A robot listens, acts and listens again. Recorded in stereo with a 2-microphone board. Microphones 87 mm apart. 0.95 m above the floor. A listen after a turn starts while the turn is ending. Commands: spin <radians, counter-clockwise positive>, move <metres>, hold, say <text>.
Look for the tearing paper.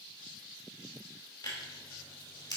spin 0.96
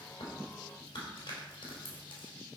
spin 1.22
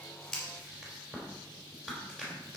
say Found it: tearing paper, straight ahead, 2 to 4 m away.